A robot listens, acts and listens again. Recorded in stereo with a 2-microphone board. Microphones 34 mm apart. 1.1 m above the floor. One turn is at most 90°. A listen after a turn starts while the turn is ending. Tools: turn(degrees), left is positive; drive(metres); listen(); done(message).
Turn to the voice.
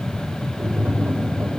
listen()
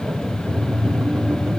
listen()
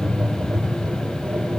done("I can't make out anyone speaking to turn to.")